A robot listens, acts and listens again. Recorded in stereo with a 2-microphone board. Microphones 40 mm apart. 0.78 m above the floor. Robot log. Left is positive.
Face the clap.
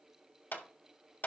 note: The clap: about 55° left or 125° left.
cmd yaw +55
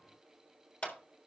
note: So it is at 50° left.
cmd yaw +50
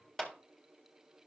note: The clap is now 15° left.
cmd yaw +15
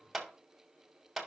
end: Facing the clap, 1 to 2 m away.